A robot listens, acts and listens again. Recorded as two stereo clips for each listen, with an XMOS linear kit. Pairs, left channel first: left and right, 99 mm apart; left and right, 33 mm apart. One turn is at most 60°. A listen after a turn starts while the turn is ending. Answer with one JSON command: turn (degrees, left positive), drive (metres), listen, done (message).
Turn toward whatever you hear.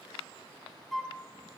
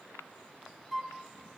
{"turn": 30}
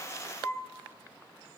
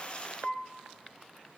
{"turn": 60}
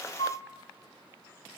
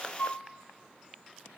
{"turn": 60}
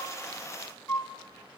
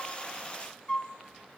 {"turn": 25}
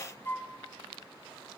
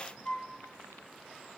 {"turn": 25}
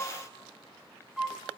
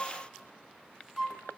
{"done": "Facing the flute."}